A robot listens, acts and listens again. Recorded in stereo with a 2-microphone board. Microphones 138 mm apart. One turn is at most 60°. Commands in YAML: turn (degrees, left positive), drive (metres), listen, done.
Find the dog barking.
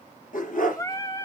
turn: 60
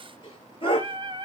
turn: 40
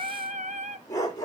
turn: 25
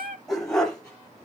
done: "Found it: a dog barking, straight ahead, over 4 m away."